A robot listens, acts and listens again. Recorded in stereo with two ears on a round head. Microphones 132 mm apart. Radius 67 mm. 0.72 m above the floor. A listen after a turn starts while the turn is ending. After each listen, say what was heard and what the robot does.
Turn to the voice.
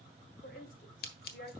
The woman speaking: about 60° left or 120° left. Turn 60° left.
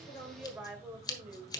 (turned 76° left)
So it is at 15° right. Turn 15° right.
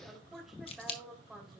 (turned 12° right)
Facing the woman speaking.